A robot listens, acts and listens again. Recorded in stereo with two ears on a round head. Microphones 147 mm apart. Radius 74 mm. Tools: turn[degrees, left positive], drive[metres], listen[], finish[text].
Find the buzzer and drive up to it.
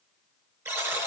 Thought: The buzzer: about 15° right or 165° right.
Action: turn[-15]
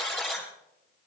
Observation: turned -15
Action: drive[1.0]
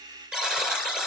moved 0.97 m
Action: drive[1.0]
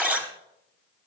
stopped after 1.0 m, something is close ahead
Thought: The buzzer is now 15° right.
Action: turn[-15]
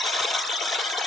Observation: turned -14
Action: finish[Arrived at the buzzer, straight ahead.]